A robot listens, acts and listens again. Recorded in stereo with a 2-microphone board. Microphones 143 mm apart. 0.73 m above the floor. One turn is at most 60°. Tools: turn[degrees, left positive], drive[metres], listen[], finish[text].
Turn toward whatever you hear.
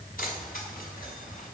Action: turn[60]
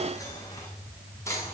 Thought: So it is at 20° left.
Action: turn[20]
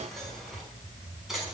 Action: finish[Found it: keys jangling, straight ahead.]